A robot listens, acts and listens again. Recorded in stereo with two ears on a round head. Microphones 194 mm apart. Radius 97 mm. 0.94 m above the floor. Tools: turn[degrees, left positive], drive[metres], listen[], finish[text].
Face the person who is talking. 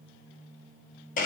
Action: listen[]
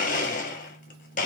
Action: listen[]
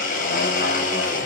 Action: finish[I can't make out anyone speaking, only a blender.]